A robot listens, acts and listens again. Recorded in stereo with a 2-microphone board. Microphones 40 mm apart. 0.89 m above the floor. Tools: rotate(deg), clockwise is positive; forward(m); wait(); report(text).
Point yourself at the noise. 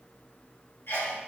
rotate(-65)
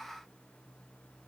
wait()
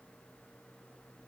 report("I heard a sneeze, but can't make it out now. It was about straight ahead or 50° left.")